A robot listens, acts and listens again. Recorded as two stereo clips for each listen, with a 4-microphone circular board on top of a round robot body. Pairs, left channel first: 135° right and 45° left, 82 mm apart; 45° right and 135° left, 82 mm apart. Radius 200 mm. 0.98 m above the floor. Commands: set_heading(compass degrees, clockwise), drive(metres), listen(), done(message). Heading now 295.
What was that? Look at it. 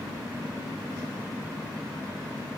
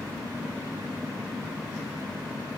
listen()
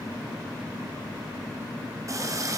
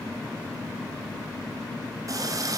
set_heading(205)
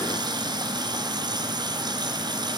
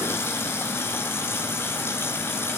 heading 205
set_heading(190)
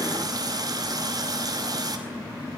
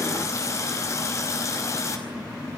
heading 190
done("Found it: a running tap, straight ahead, over 4 m away.")